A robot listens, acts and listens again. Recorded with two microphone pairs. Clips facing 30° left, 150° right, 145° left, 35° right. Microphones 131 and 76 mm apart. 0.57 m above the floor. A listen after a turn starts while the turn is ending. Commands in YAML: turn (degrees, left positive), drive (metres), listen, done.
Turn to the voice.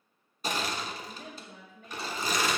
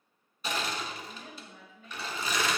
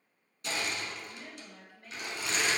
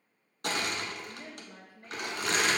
turn: 20
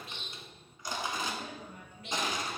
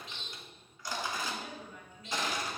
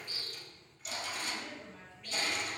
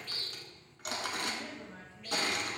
done: "Facing the woman speaking."